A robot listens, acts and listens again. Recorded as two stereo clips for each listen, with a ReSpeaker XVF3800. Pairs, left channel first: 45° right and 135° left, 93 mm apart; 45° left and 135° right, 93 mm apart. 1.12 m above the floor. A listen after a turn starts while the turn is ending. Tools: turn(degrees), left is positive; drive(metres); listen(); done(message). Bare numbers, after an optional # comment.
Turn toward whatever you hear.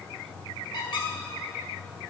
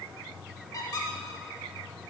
done("Found it: a squeak, straight ahead, 1 to 2 m away.")